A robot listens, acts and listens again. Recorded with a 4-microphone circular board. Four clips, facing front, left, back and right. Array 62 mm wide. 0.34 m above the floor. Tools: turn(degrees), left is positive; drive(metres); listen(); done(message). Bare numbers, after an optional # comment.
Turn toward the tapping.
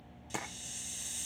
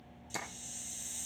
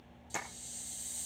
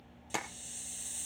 # The tapping: 80° right.
turn(-80)
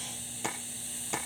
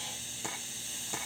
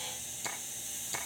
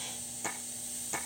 listen()
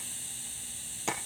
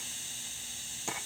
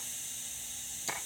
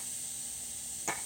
listen()
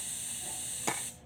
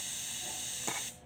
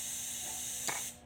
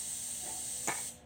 done("Facing where the tapping came from. I can't hear it now.")